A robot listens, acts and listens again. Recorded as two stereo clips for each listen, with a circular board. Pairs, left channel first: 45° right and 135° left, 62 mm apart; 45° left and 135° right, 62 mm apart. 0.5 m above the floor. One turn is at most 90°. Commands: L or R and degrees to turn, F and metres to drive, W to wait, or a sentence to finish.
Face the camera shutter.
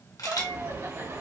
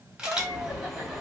R55
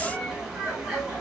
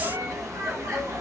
W
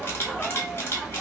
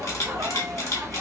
L10
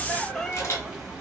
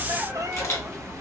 W
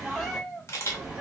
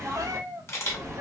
Found it: a camera shutter, straight ahead, 1 to 2 m away.